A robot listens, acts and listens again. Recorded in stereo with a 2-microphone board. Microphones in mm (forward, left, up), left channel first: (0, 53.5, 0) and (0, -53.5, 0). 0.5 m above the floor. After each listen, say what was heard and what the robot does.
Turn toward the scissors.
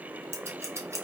The scissors: about 25° right or 155° right. Turn 25° right.
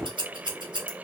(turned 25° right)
So it is at 130° right. Turn 130° right.
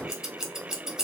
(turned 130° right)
Found it: scissors, straight ahead.